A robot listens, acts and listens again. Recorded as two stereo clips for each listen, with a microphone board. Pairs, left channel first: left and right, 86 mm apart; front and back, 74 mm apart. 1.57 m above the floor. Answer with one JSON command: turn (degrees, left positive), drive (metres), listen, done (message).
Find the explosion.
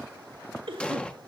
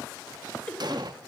{"turn": 165}
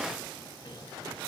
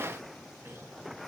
{"done": "Facing where the explosion came from. I can't hear it now."}